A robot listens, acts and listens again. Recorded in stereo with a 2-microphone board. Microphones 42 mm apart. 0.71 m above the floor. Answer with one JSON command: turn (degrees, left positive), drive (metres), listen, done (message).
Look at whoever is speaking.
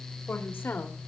{"turn": 60}
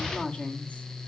{"turn": 25}
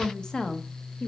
{"turn": 25}
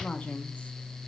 {"turn": 35}
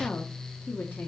{"turn": 50}
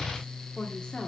{"turn": 20}
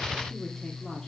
{"done": "Found it: a woman speaking, straight ahead, 1 to 2 m away."}